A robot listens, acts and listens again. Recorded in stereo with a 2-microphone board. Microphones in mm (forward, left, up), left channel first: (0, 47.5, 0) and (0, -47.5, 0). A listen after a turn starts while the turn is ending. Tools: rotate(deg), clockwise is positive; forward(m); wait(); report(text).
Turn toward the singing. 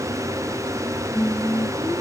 rotate(-15)
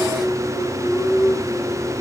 rotate(-25)
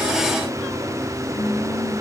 rotate(-135)
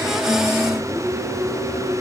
rotate(10)
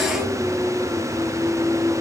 report("Found it: singing, straight ahead.")